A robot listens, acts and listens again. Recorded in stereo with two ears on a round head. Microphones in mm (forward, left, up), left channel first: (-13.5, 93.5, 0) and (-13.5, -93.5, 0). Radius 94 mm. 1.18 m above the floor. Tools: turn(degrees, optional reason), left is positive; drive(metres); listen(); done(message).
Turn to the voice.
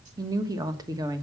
turn(degrees=-20, reason="The woman speaking: about 20° right or 160° right.")
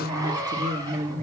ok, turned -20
turn(degrees=-140, reason="So it is at 140° right.")
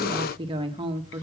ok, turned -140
turn(degrees=-25, reason="The woman speaking is now 25° right.")
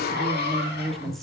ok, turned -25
done("Facing the woman speaking, 1 to 2 m away.")